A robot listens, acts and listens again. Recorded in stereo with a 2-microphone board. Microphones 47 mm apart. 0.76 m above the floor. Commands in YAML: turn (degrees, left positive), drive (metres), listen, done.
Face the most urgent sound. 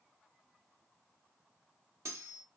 listen: true
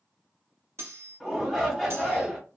turn: 30
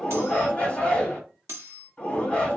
turn: 150
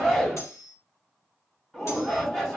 done: "Facing the shout."